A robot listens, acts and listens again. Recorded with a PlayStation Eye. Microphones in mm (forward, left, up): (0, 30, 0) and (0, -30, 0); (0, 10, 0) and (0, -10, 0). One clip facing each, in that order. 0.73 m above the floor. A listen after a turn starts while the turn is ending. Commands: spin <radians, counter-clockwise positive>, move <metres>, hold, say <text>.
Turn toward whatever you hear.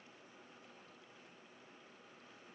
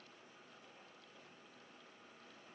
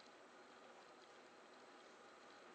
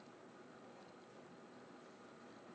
hold
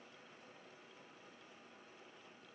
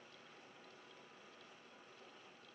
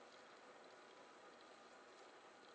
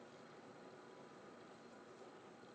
hold
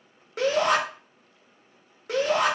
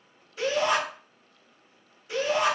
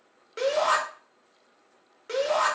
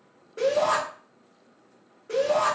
spin 1.13
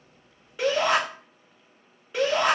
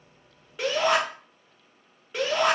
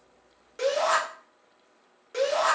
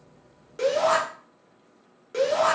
say Facing the shout.